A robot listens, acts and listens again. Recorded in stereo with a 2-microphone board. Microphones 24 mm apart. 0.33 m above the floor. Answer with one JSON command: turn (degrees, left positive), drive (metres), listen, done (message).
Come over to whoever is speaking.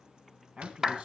{"turn": -55}
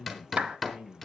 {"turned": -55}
{"turn": -65}
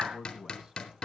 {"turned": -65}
{"turn": -25}
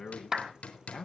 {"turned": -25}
{"turn": 10}
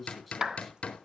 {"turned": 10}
{"drive": 1.0}
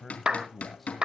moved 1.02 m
{"drive": 1.0}
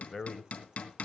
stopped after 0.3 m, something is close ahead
{"done": "I am next to the man speaking."}